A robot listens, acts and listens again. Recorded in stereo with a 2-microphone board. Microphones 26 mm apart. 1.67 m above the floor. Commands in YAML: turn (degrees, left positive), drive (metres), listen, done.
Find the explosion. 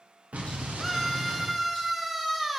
turn: -55
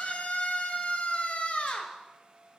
listen: true
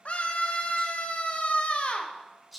done: "I heard an explosion, but can't make it out now. It was about straight ahead or 70° right."